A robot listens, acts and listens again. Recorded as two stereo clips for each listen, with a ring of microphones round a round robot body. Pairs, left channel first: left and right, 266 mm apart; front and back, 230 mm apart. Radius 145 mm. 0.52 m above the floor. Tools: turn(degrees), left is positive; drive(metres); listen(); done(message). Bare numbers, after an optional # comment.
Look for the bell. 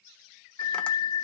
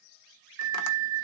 # The bell: 160° left.
turn(160)
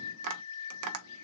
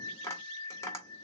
# The bell is now 80° left.
turn(80)
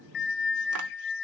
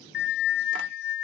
# The bell is now 35° left.
turn(35)
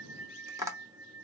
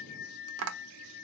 # The bell is now 10° right.
turn(-10)
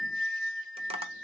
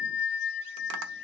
done("Facing the bell, under 1 m away.")